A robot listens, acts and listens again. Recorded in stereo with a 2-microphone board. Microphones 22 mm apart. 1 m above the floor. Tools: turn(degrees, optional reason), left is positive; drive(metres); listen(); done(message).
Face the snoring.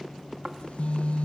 turn(degrees=-35, reason="The snoring: about 35° right or 145° right.")
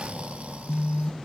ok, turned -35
turn(degrees=-105, reason="So it is at 105° right.")
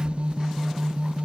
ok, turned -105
listen()
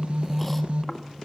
listen()
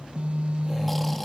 done("Facing where the snoring came from. I can't hear it now.")